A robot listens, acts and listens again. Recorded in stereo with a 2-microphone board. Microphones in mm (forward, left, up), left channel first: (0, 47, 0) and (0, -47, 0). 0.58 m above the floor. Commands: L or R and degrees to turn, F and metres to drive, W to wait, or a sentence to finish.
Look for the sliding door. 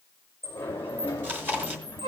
L25
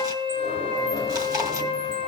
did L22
W
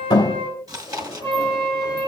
L130
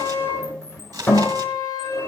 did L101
L30
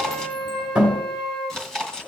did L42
R15
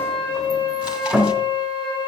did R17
Found it: a sliding door, straight ahead.